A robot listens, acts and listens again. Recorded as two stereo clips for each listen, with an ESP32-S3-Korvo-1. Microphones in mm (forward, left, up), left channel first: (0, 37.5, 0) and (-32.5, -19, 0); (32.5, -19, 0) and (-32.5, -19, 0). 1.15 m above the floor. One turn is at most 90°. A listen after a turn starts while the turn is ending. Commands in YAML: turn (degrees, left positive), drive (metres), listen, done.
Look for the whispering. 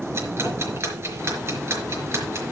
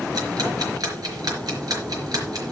listen: true
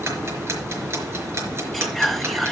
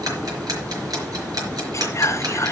turn: -25
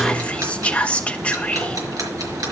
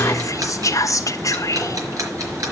turn: -10
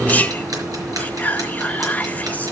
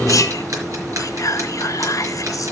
done: "Facing the whispering, 1 to 2 m away."